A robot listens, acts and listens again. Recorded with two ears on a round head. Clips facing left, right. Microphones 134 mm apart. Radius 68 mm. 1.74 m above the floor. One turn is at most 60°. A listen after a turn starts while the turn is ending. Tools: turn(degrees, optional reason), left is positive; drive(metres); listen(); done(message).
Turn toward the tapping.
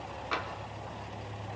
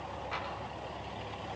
turn(degrees=60)
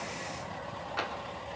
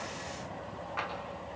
turn(degrees=40, reason="So it is at 40° left.")
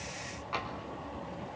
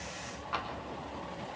done("Facing the tapping.")